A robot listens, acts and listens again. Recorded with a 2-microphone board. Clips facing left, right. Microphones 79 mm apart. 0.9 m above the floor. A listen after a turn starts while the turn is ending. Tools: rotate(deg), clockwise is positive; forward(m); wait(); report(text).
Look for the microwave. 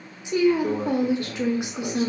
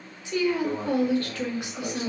rotate(-40)
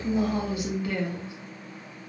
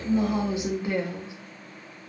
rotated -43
wait()
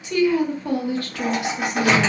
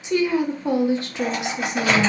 rotate(-95)
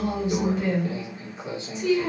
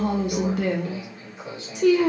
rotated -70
rotate(-25)
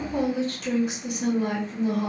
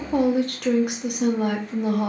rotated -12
rotate(-15)
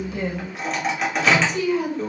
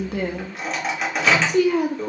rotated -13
report("Found it: a microwave, straight ahead.")